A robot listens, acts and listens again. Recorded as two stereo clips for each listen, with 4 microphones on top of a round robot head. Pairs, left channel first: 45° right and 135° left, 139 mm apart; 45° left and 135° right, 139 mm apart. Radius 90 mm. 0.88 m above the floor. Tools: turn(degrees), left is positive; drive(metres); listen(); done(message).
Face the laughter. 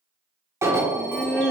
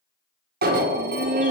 turn(degrees=-125)
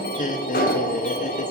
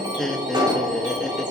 turn(degrees=-40)
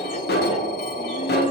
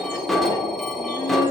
listen()
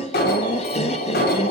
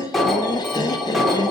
turn(degrees=-10)
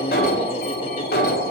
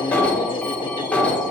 listen()
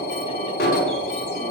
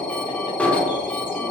listen()
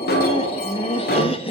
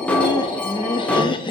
done("Facing the laughter.")